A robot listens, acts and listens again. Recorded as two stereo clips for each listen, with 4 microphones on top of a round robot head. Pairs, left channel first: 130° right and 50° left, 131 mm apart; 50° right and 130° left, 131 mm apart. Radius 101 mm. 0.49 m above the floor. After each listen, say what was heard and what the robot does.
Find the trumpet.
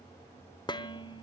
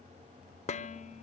Keep listening.
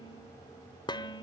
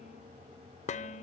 Keep listening.
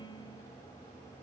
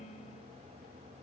I can't make out a trumpet, only dishes clattering.